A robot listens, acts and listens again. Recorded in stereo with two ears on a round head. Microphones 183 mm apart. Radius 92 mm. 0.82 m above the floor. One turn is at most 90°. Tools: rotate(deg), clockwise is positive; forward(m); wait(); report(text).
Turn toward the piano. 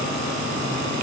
wait()
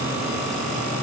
wait()
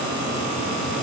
report("I can't make out a piano.")